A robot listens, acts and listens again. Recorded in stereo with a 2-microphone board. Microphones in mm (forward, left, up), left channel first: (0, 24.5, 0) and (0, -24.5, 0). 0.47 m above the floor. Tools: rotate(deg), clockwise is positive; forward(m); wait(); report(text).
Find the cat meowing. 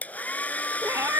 rotate(70)
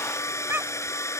rotate(45)
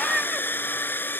rotate(10)
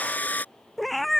report("Found it: a cat meowing, straight ahead.")